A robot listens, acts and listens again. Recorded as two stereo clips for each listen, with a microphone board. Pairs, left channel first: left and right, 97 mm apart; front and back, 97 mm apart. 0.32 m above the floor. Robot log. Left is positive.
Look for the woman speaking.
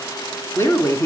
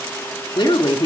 note: The woman speaking: 30° left.
cmd yaw +30
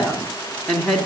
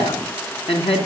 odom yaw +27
end: Facing the woman speaking, 2 to 4 m away.